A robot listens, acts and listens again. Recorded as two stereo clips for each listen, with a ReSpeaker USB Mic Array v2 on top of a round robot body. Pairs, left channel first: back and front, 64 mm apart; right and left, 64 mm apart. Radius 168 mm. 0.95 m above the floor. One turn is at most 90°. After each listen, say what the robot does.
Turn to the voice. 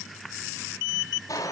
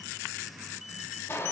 Keep listening.
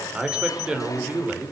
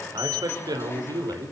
Turn 75° left.
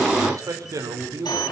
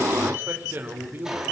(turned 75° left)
Turn 35° left.
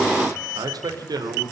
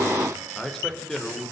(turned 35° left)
Facing the man speaking.